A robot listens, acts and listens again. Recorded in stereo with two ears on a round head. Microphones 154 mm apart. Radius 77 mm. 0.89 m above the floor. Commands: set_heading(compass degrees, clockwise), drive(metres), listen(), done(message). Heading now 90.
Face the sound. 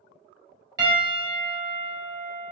set_heading(110)
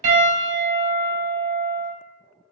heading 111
set_heading(251)
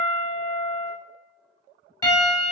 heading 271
set_heading(251)
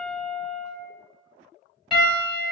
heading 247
done("Facing the piano.")